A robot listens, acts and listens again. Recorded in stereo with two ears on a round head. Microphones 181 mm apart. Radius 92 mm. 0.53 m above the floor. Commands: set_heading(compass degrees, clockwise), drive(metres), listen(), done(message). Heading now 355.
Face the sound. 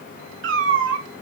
set_heading(55)
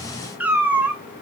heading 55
set_heading(65)
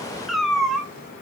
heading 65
done("Facing the cat meowing.")